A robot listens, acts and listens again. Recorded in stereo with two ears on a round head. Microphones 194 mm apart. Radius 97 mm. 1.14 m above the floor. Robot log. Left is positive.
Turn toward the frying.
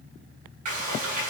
note: The frying: about 40° right or 140° right.
cmd yaw -40
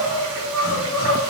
cmd idle
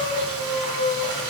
note: So it is at 100° right.
cmd yaw -100
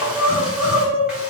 cmd idle
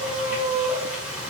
end: Facing the frying.